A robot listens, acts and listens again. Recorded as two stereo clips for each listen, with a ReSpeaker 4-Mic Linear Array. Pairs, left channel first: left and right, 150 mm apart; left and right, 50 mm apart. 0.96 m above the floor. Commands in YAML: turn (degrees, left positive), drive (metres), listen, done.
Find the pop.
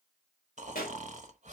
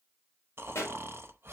turn: 90
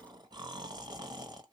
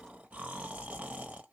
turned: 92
done: "Facing where the pop came from. I can't hear it now."